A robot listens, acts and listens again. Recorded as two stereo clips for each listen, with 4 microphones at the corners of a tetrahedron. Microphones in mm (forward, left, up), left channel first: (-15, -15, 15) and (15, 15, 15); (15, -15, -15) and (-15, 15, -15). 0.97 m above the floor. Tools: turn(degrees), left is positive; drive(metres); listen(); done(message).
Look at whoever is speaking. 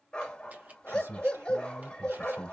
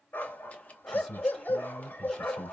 turn(degrees=40)
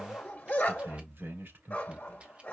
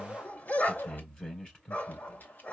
turn(degrees=20)
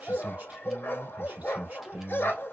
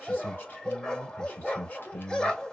done("Facing the man speaking, 2 to 4 m away.")